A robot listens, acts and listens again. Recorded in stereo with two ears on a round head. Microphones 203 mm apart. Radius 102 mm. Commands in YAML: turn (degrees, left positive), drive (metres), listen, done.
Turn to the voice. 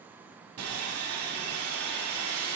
listen: true
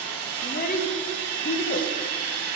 turn: 35
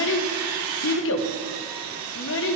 turn: 105
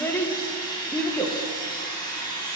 turn: 10
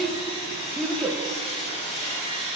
done: "Facing the child speaking, under 1 m away."